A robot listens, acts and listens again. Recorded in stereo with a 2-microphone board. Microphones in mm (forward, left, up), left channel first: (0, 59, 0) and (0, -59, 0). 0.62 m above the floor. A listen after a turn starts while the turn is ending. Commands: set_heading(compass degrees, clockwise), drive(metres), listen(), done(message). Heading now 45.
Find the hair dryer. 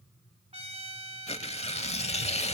listen()
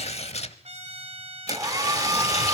set_heading(75)
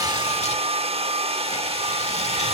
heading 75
set_heading(195)
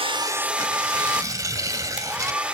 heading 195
set_heading(205)
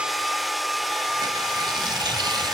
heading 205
done("Facing the hair dryer, under 1 m away.")